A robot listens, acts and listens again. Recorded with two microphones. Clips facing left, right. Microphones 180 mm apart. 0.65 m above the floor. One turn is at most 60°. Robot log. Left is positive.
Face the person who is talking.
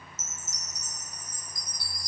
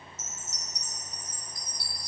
cmd idle
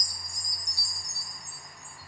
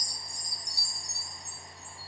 cmd idle
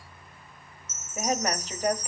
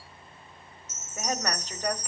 cmd yaw +30
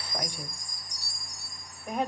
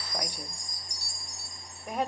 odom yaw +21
note: So it is at 10° right.
cmd yaw -10
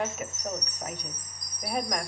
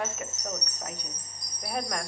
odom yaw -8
end: Facing the woman speaking.